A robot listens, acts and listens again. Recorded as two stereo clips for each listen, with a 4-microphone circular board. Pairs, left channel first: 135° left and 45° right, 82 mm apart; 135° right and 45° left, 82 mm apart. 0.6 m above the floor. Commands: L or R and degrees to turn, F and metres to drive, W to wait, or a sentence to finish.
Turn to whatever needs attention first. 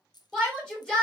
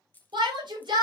L55
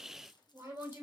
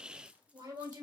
L15
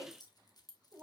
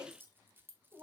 W
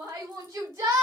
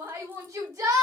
Facing the shout.